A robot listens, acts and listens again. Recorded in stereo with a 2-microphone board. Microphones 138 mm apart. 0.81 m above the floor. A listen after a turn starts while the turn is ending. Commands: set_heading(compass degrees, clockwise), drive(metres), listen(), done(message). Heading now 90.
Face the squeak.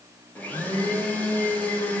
listen()
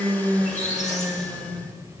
set_heading(30)
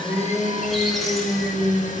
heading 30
listen()
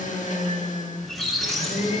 done("Found it: a squeak, straight ahead, 1 to 2 m away.")